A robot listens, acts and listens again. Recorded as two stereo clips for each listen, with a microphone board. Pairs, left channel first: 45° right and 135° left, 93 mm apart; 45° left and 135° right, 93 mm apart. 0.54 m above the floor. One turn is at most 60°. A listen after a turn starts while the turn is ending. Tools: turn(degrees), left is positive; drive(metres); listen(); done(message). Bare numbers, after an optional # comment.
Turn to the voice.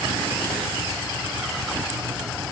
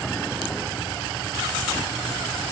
listen()
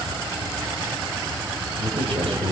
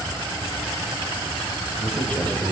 # The man speaking: 120° left.
turn(60)
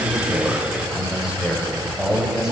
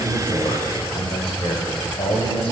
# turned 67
# The man speaking is now 55° left.
turn(55)
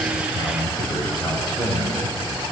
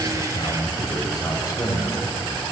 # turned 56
done("Found it: a man speaking, straight ahead.")